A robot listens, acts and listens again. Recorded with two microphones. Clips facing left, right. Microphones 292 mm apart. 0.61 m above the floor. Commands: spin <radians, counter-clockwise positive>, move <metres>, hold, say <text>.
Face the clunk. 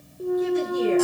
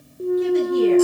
spin -0.44
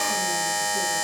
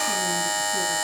hold
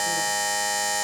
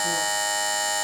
say I heard a clunk, but can't make it out now. It was about straight ahead or 130° right.